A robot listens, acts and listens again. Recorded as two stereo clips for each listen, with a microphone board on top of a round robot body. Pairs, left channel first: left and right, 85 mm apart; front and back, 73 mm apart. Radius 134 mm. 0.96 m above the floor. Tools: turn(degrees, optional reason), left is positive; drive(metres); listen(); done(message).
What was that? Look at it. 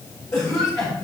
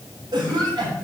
turn(degrees=150, reason="The cough: 150° left.")
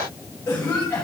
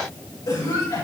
turn(degrees=30, reason="The cough is now 30° left.")
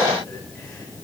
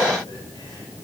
listen()
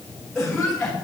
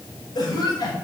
done("Facing the cough, over 4 m away.")